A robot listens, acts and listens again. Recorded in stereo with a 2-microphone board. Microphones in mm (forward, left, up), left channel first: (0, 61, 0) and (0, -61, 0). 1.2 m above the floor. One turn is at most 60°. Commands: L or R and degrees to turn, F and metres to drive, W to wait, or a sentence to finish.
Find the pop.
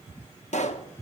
L60
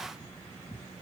W
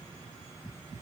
I heard a pop, but can't make it out now. It was about 10° left or 50° left.